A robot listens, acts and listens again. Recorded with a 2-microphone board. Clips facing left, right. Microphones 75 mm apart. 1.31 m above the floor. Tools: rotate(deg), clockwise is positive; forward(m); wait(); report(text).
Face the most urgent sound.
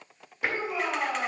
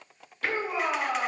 rotate(55)
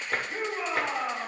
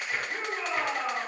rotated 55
report("Facing the shout.")